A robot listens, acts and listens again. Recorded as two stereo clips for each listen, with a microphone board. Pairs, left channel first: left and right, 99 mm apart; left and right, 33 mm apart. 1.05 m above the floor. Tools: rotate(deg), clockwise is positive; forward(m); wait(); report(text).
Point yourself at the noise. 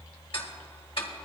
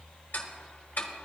rotate(-65)
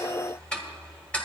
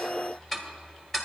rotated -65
rotate(-10)
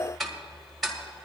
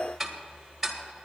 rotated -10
report("Facing the ticking.")